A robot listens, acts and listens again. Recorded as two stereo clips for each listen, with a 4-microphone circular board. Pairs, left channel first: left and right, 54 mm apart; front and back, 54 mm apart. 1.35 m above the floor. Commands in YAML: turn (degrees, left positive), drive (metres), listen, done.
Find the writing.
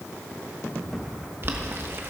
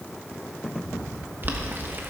listen: true
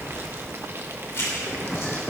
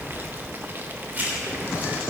turn: 125
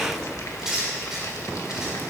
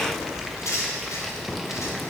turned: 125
turn: -10
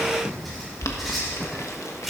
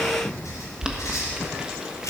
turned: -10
done: "Found it: writing, straight ahead."